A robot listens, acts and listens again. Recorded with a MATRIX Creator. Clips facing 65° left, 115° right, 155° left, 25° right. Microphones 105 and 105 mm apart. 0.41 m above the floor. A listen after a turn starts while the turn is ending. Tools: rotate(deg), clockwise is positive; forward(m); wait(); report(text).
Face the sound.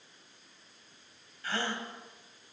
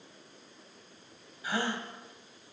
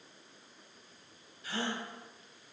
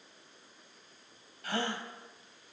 rotate(35)
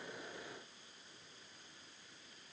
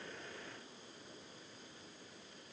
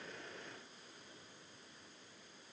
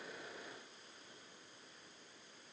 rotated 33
report("I heard a gasp from this way, but can't make it out now.")